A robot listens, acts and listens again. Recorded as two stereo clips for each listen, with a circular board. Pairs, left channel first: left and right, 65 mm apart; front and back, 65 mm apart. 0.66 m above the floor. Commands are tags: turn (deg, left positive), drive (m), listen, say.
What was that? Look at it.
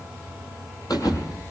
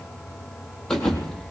<turn deg="80"/>
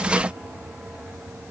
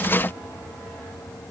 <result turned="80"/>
<say>Facing where the thud came from. I can't hear it now.</say>